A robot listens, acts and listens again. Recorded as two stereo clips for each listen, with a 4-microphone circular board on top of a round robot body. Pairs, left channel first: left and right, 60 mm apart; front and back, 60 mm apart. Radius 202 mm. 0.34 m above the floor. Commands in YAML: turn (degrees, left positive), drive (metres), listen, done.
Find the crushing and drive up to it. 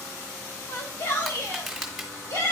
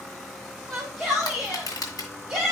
drive: 1.0
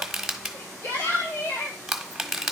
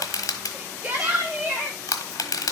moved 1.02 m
drive: 1.0
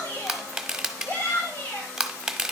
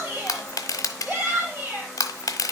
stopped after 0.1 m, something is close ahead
turn: -10
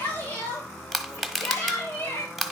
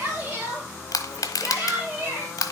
done: "Arrived at the crushing, straight ahead."